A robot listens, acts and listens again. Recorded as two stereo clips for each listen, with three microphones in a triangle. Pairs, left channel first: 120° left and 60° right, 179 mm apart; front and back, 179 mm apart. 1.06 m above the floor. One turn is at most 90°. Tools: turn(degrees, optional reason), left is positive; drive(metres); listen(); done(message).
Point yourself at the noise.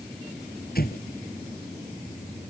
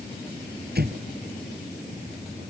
turn(degrees=90, reason="The explosion: 155° left.")
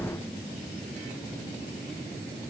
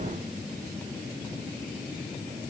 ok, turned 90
turn(degrees=65, reason="Nothing new. It was at 65° left.")
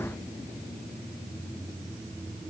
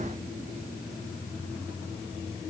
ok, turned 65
done("Facing where the explosion came from. I can't hear it now.")